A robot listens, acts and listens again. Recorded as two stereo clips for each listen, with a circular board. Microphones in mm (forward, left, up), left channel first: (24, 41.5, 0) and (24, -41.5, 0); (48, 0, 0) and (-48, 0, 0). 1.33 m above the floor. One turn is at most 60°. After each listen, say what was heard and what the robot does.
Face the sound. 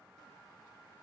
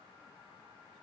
Keep listening.
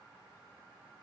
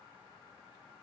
Keep listening.
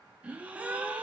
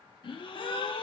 The gasp: 20° right. Turn 20° right.
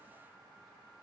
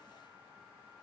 Facing where the gasp came from. I can't hear it now.